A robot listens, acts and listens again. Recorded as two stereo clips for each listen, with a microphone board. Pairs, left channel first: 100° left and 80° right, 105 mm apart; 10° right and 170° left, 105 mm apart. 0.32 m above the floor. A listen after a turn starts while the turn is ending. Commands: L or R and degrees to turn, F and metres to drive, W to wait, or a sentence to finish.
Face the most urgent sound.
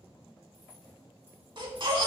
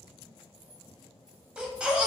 R110
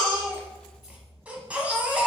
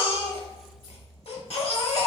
Facing the baby crying, under 1 m away.